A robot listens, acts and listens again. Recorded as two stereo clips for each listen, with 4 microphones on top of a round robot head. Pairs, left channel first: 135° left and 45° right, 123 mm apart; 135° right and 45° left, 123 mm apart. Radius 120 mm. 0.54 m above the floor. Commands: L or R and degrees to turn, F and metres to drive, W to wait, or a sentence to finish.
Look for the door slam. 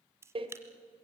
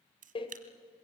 R90
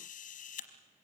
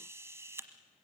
Facing where the door slam came from. I can't hear it now.